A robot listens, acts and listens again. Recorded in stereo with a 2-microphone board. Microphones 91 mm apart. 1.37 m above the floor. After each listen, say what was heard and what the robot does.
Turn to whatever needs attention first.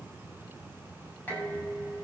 Keep listening.
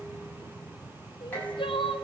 The crying: about 70° left or 110° left. Turn 70° left.
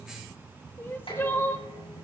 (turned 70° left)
So it is at 30° left. Turn 30° left.
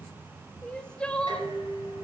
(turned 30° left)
The crying is now 10° left. Turn 10° left.
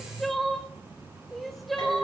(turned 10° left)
Found it: crying, straight ahead.